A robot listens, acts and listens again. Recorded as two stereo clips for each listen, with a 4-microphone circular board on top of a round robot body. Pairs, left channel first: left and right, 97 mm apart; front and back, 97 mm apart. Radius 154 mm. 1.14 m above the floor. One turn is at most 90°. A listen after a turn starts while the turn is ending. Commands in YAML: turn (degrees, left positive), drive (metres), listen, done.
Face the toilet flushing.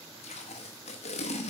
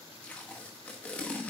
listen: true
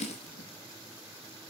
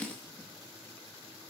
listen: true
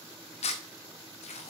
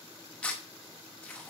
done: "I can't make out a toilet flushing, only tape being pulled."